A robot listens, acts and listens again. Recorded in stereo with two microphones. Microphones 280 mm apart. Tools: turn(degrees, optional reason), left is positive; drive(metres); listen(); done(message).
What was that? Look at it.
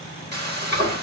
turn(degrees=-35, reason="The frying: about 35° right or 145° right.")
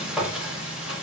done("Found it: frying, straight ahead, 1 to 2 m away.")